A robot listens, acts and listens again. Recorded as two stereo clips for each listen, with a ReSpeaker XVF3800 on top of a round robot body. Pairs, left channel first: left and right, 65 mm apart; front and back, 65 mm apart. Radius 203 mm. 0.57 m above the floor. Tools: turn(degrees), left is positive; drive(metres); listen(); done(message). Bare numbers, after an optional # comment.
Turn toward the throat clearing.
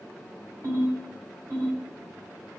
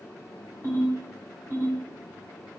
listen()
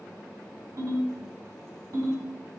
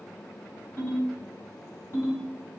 listen()
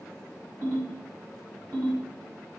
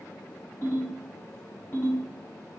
done("I can't make out throat clearing, only a ringtone.")